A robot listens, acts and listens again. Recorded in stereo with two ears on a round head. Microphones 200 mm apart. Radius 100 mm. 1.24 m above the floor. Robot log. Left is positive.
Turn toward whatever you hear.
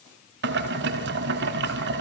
note: The boiling: about 50° right or 130° right.
cmd yaw -50
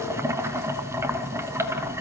note: So it is at 15° right.
cmd yaw -15
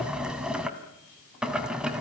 end: Found it: boiling, straight ahead, 1 to 2 m away.